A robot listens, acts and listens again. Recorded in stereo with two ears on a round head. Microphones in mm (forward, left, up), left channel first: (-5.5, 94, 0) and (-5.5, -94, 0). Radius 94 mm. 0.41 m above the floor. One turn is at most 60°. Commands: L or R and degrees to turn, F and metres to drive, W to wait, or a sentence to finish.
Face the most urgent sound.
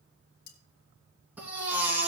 R30
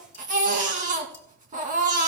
R60
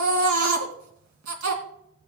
R60
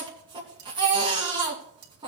R25
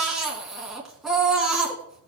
Facing the baby crying, 2 to 4 m away.